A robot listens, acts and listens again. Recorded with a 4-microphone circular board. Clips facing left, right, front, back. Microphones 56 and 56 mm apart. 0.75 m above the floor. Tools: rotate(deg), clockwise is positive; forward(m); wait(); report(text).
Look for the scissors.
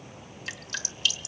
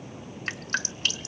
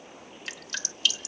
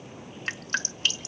wait()
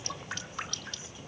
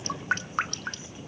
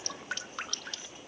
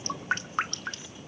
wait()
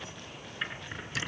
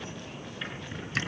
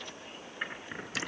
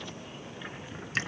rotate(-20)
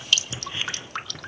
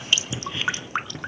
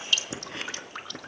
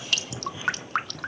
report("Facing the scissors.")